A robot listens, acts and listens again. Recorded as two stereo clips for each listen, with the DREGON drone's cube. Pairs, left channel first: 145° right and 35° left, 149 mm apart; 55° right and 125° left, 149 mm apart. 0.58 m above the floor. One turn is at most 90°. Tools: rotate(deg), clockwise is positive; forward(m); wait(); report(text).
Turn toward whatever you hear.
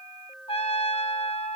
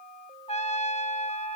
rotate(90)
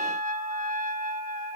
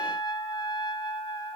report("Found it: a trumpet, straight ahead, 1 to 2 m away.")